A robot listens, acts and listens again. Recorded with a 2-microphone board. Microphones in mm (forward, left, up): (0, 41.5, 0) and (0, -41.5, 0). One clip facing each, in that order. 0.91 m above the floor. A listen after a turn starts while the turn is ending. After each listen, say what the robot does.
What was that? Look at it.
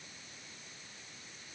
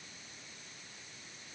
Keep listening.
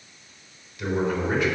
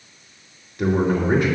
Turn 45° right.
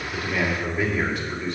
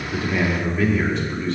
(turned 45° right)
Turn 10° left.
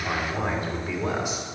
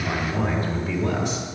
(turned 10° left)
Turn 10° left.
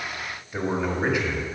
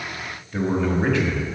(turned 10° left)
Turn 10° left.
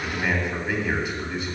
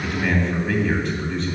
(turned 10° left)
Facing the man speaking.